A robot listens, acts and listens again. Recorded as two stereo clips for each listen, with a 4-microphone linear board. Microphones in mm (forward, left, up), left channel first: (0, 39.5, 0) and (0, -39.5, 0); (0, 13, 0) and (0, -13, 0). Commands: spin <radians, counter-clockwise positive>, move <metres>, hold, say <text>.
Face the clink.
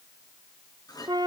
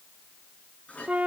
spin 0.96
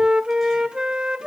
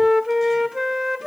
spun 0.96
hold
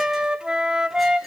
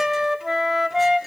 say Found it: a clink, straight ahead, over 4 m away.